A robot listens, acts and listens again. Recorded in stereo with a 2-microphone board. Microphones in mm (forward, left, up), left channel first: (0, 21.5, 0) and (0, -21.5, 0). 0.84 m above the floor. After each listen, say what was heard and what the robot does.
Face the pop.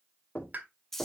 The pop: about 40° right or 140° right. Turn 40° right.
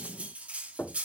Keep listening.
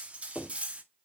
I heard a pop, but can't make it out now. It was about straight ahead or 100° right.